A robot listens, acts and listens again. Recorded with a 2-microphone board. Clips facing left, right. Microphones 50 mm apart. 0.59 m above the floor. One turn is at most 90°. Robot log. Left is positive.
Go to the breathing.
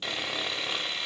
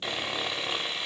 cmd idle
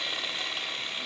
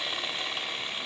cmd idle
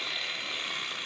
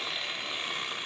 end: I can't make out breathing to turn to.